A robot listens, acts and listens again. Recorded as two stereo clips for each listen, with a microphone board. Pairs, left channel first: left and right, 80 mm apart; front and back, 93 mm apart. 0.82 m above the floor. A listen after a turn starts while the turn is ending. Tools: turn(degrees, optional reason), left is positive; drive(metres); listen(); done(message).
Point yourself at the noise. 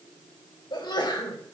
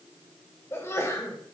turn(degrees=65, reason="The sneeze: 65° left.")
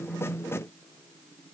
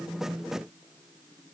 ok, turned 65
done("Facing where the sneeze came from. I can't hear it now.")